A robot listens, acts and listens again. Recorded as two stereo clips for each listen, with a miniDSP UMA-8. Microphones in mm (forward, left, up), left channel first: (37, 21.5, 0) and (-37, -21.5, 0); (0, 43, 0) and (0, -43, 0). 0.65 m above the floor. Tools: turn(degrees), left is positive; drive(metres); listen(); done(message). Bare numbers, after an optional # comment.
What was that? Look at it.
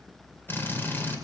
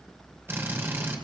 # The drill: 30° right.
turn(-30)
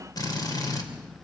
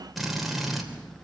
done("Facing the drill.")